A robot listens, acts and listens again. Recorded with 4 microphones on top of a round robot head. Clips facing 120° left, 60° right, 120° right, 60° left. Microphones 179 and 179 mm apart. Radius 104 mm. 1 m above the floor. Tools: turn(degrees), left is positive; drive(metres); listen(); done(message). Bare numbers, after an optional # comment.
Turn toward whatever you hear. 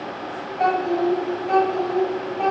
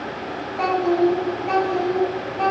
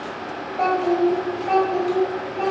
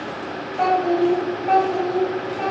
# The child speaking: 30° right.
turn(-30)
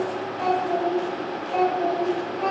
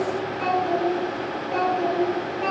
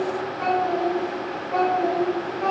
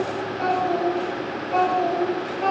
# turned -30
done("Facing the child speaking, 2 to 4 m away.")